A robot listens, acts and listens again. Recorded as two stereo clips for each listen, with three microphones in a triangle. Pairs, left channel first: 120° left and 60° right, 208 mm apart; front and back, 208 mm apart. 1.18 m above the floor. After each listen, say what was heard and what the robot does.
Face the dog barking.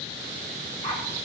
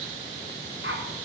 The dog barking: 170° right. Turn 170° right.
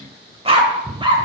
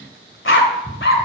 Found it: a dog barking, straight ahead.